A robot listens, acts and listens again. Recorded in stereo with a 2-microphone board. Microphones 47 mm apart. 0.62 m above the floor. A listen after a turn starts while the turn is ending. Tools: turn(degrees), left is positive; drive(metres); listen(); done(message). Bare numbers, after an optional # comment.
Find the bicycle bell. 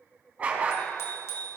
turn(90)
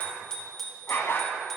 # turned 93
done("Found it: a bicycle bell, straight ahead.")